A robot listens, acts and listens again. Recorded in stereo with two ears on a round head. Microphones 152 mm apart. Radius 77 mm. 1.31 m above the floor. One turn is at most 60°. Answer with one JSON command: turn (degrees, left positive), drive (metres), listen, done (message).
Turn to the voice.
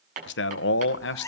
{"turn": 60}
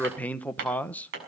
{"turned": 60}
{"turn": 10}
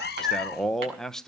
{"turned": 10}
{"done": "Facing the man speaking."}